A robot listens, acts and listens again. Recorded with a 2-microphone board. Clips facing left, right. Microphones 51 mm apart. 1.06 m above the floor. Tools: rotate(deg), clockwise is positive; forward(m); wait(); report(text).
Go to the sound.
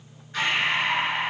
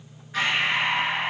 rotate(30)
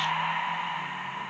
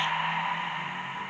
rotate(135)
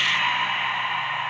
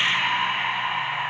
rotate(15)
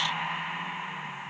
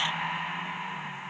forward(1.0)
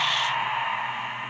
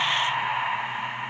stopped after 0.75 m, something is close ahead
report("Arrived at the breathing, straight ahead.")